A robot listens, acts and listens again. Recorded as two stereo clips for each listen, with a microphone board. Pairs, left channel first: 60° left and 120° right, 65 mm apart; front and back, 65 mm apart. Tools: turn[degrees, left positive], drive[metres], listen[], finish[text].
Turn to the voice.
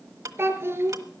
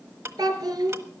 Thought: The child speaking: 175° right.
Action: turn[-175]
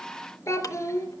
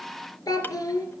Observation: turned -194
Thought: The child speaking is now 20° left.
Action: turn[20]
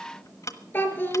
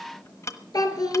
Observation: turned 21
Action: finish[Found it: a child speaking, straight ahead, 2 to 4 m away.]